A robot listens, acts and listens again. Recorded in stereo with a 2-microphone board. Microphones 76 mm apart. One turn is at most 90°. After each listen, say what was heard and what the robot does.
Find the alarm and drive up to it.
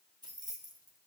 Keep listening.
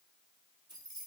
Keep listening.
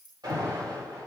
The alarm: about 65° right or 115° right. Turn 65° right.
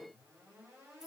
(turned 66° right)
Keep listening.
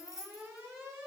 So it is at 40° right. Turn 40° right.
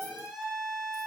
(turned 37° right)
Drive 1.0 m forward.
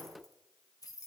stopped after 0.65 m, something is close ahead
Keep listening.
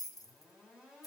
Keep listening.
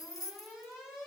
Something is in my way. I am facing the alarm but have not reached it.